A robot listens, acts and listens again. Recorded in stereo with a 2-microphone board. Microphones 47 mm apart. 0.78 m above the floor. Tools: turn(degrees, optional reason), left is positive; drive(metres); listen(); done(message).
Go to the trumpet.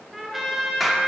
turn(degrees=-30)
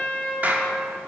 turn(degrees=25, reason="So it is at 25° left.")
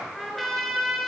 drive(metres=1.0)
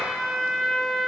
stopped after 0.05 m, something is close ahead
done("Something is in my way. I am facing the trumpet but have not reached it.")